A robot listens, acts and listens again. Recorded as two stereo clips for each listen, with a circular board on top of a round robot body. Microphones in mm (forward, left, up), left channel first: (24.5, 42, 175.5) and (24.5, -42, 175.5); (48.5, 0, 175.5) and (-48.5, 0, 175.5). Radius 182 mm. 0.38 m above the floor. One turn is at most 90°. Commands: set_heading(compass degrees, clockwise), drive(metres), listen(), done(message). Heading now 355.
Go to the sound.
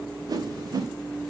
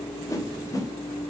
set_heading(50)
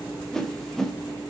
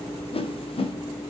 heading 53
drive(1.0)
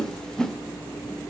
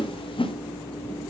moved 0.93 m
set_heading(43)
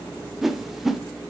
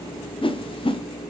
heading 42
drive(1.0)
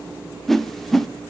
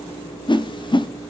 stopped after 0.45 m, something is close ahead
done("Arrived at the whoosh, straight ahead.")